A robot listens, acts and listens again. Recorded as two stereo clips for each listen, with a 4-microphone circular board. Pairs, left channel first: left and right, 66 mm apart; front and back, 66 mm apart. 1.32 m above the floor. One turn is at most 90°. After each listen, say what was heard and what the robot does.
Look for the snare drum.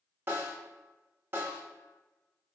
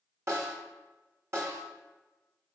The snare drum: 140° right. Turn 90° right.
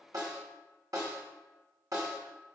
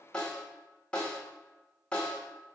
The snare drum is now 70° right. Turn 70° right.
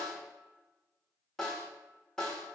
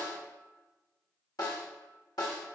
The snare drum is now 10° left. Turn 10° left.
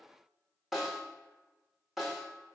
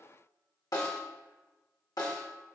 Facing the snare drum.